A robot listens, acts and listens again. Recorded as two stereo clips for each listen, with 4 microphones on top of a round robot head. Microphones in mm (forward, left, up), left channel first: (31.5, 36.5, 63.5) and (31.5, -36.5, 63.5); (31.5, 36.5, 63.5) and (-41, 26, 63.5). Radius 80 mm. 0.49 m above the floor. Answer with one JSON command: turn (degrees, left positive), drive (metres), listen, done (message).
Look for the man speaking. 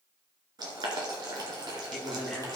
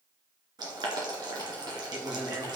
{"turn": 175}
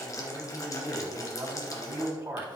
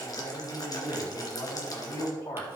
{"turn": -30}
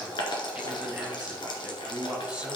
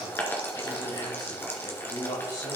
{"turn": -10}
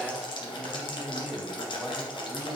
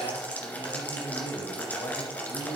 {"done": "Found it: a man speaking, straight ahead."}